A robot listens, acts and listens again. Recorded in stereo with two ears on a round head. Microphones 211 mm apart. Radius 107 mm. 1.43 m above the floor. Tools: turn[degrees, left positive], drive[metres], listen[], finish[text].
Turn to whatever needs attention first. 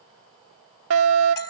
Thought: The fire alarm: about 60° right or 120° right.
Action: turn[-60]
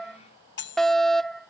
Action: finish[Facing the fire alarm.]